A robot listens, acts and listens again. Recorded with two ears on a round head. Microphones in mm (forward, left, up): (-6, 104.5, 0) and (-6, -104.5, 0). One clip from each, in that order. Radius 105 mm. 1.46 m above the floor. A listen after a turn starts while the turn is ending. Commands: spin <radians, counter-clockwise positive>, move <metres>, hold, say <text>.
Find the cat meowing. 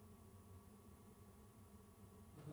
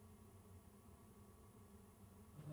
hold
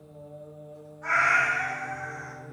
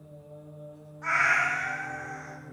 spin -0.52
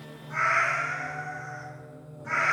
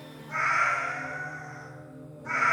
spin -0.52
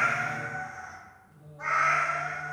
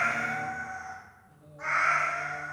spin -2.44
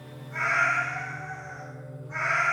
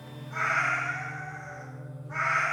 say Facing the cat meowing, 2 to 4 m away.